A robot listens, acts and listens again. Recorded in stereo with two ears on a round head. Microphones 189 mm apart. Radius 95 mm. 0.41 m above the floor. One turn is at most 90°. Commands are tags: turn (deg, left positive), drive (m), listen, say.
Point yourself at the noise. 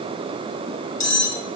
<turn deg="35"/>
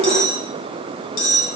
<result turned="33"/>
<turn deg="90"/>
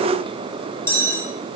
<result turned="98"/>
<turn deg="10"/>
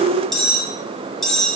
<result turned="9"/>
<say>Facing the cutlery clinking.</say>